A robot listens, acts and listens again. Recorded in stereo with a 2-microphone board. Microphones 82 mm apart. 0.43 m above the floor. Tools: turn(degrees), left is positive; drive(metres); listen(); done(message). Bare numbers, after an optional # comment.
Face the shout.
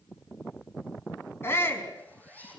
# The shout: about 30° left or 150° left.
turn(30)
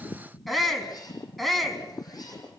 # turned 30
done("Found it: a shout, straight ahead.")